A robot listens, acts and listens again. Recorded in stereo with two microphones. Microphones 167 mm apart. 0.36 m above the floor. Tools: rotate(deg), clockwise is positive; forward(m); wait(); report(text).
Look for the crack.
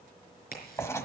rotate(-65)
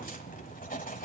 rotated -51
wait()
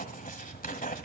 report("I heard a crack, but can't make it out now. It was about 15° left or 65° left.")